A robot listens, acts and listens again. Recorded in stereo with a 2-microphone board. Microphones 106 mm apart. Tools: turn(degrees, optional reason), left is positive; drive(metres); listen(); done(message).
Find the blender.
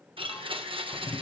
turn(degrees=-65, reason="The blender: about 65° right or 115° right.")
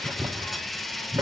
done("Facing the blender, 1 to 2 m away.")